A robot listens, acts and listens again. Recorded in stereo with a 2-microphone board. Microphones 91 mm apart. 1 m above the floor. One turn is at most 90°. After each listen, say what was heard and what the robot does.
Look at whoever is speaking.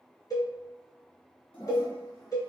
Keep listening.
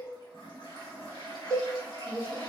The woman speaking: about 30° left or 150° left. Turn 30° left.
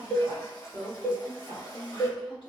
So it is at 110° left. Turn 90° left.
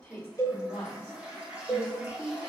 The woman speaking is now 40° left. Turn 40° left.
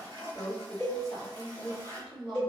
Facing the woman speaking.